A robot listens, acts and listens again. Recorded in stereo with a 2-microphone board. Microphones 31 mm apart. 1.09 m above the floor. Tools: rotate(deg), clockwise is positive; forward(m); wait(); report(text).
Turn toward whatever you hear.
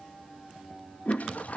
rotate(-55)
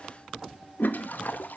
rotate(-70)
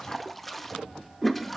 report("Found it: a toilet flushing, straight ahead.")